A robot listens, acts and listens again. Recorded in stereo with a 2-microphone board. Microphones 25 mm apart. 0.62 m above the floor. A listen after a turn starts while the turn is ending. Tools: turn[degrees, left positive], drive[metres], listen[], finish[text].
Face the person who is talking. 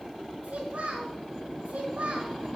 Action: turn[-90]
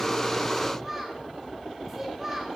Thought: So it is at 10° right.
Action: turn[-10]
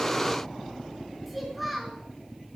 Action: finish[Found it: a child speaking, straight ahead.]